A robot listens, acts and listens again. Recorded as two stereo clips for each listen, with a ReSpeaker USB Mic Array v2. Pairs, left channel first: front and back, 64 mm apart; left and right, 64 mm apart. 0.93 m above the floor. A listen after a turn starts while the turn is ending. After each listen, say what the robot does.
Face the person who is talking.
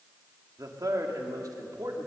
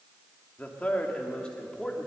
Turn 170° left.
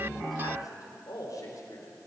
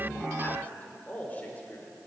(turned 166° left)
Turn 25° left.
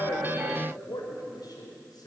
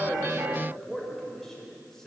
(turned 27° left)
Facing the man speaking.